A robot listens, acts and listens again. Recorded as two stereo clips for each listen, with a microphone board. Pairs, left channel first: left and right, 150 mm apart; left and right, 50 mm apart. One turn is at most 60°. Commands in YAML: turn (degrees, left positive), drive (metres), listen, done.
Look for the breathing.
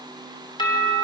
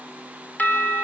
listen: true
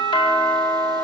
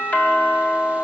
listen: true
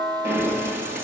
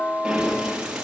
turn: -15
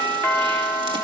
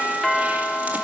listen: true
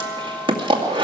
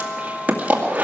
turn: -60
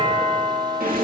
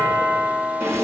turn: -60
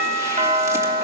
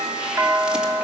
turn: -30
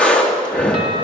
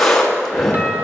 done: "Found it: breathing, straight ahead, 2 to 4 m away."